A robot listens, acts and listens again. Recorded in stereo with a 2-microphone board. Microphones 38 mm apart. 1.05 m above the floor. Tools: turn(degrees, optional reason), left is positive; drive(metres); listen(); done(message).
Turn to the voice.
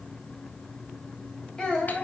turn(degrees=20, reason="The child speaking: about 20° left or 160° left.")
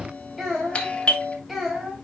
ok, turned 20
done("Facing the child speaking.")